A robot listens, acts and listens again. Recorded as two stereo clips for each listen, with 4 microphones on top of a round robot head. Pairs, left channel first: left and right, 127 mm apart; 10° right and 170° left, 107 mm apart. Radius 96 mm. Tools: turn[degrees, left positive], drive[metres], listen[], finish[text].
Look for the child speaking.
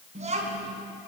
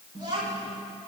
Thought: The child speaking: 130° right.
Action: turn[-130]
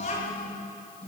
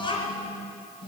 Thought: The child speaking is now 35° left.
Action: turn[35]
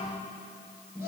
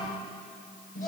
Thought: The child speaking is now 15° right.
Action: turn[-15]
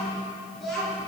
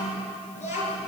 Action: finish[Facing the child speaking, over 4 m away.]